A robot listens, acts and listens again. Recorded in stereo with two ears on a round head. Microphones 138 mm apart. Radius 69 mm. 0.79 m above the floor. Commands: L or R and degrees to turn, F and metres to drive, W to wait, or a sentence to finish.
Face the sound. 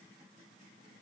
W
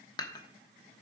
L25
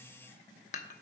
L130
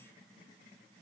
W
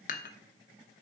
L55
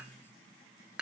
Facing the dishes clattering, 1 to 2 m away.